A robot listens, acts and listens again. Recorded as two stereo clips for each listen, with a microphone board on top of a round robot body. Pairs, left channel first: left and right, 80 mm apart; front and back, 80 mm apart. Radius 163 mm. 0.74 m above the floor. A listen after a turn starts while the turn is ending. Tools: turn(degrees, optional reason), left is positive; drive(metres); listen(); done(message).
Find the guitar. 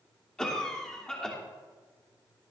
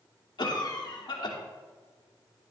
listen()
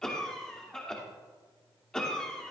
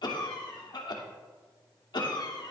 listen()
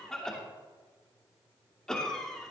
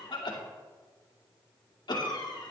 done("I can't make out a guitar to turn to.")